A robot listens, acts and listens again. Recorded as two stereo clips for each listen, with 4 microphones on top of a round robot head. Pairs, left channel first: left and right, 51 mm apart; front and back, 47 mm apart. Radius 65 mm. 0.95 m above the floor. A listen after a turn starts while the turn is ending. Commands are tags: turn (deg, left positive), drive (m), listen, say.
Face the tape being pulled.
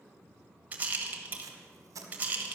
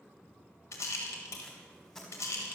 <turn deg="-75"/>
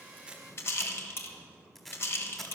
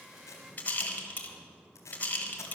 <turn deg="10"/>
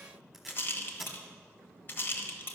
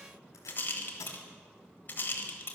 <say>Facing the tape being pulled.</say>